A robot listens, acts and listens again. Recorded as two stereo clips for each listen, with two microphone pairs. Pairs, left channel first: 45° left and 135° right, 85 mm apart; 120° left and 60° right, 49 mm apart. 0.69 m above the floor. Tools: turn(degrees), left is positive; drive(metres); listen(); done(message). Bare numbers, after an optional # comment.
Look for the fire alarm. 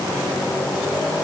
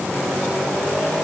listen()
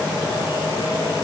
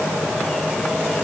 listen()
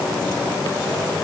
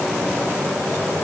done("I can't make out a fire alarm to turn to.")